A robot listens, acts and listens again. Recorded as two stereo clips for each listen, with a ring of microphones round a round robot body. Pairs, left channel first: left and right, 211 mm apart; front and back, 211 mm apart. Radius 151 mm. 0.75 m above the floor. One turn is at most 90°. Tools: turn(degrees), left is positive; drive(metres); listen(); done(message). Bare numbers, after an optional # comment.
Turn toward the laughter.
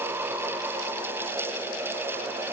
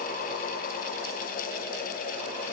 listen()
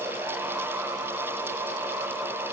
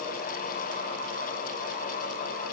listen()
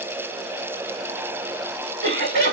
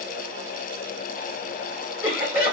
# The laughter: 55° right.
turn(-55)
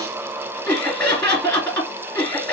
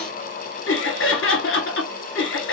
done("Found it: laughter, straight ahead, 1 to 2 m away.")